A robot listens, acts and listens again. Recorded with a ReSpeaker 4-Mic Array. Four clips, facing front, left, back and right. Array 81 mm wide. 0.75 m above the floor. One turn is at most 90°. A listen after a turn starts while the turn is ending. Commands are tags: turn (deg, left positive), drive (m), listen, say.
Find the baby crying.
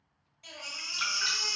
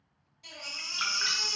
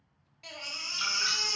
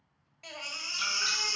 <turn deg="-90"/>
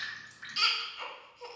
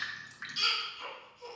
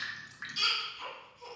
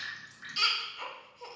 <turn deg="-50"/>
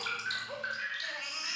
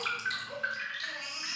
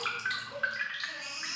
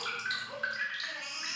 <say>Found it: a baby crying, straight ahead.</say>